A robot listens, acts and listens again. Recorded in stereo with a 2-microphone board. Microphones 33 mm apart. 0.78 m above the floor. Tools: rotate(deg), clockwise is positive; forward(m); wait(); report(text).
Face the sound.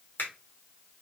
rotate(-60)
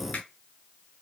rotate(-50)
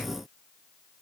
wait()
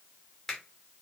rotate(-15)
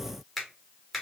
report("Found it: a finger snap, straight ahead.")